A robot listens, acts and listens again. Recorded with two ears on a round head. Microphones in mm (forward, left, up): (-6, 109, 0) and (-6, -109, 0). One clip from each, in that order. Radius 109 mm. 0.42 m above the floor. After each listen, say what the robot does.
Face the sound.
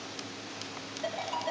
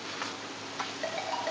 Turn 55° right.
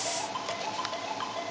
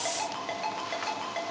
Turn 70° right.
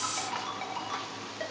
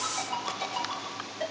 Turn 20° left.
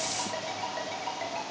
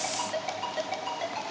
Found it: a ringtone, straight ahead, 2 to 4 m away.